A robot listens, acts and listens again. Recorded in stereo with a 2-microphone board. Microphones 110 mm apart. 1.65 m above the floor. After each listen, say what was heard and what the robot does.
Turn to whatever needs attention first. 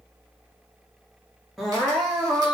Turn 30° left.
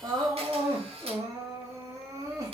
So it is at 30° right. Turn 30° right.
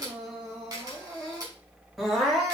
Facing the crying.